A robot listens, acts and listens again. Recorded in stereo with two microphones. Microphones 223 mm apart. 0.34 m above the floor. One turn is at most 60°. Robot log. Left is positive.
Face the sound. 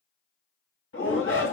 note: The shout: about 65° left or 115° left.
cmd yaw +60
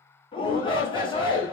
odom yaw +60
note: So it is at 25° left.
cmd yaw +25
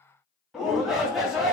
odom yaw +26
end: Facing the shout.